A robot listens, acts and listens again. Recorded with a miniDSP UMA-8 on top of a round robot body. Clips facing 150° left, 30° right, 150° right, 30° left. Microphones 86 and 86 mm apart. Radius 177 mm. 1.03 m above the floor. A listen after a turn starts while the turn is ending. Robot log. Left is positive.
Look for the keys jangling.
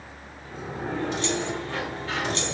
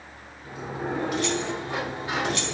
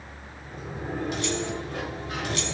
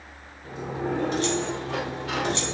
note: The keys jangling: 90° left.
cmd yaw +90
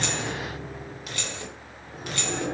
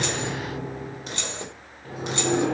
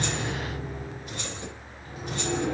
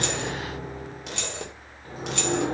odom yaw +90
note: The keys jangling is now 40° left.
cmd yaw +40
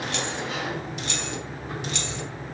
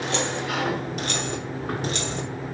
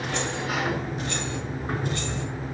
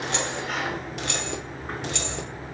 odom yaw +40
note: The keys jangling is now 20° left.
cmd yaw +20
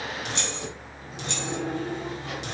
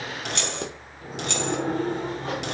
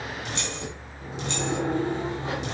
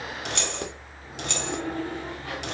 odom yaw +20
end: Found it: keys jangling, straight ahead.